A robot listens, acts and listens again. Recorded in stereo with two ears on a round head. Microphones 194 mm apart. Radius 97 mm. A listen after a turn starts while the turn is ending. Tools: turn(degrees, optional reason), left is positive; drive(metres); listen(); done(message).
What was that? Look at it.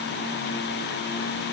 listen()
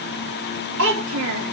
turn(degrees=-65, reason="The child speaking: about 65° right or 115° right.")
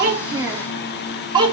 turn(degrees=-20, reason="So it is at 20° right.")
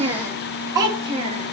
turn(degrees=-25, reason="The child speaking is now 25° right.")
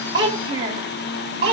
turn(degrees=-25, reason="The child speaking is now 25° right.")
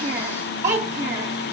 turn(degrees=-15, reason="The child speaking is now 15° right.")
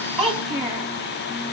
done("Found it: a child speaking, straight ahead, 2 to 4 m away.")